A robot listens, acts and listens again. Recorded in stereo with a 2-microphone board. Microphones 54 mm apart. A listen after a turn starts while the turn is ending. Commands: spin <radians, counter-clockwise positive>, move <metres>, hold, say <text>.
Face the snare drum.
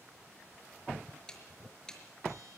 spin 0.52
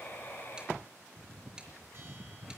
hold
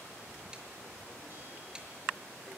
hold
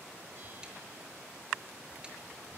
say I heard a snare drum, but can't make it out now. It was about 15° right or 135° left.